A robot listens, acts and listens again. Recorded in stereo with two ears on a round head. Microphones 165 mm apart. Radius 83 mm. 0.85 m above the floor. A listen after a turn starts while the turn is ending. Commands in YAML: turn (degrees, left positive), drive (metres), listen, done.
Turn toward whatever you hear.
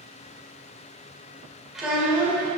turn: -30
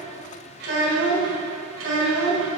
turn: -105
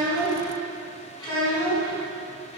turn: 25
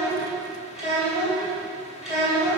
done: "Facing the child speaking, 2 to 4 m away."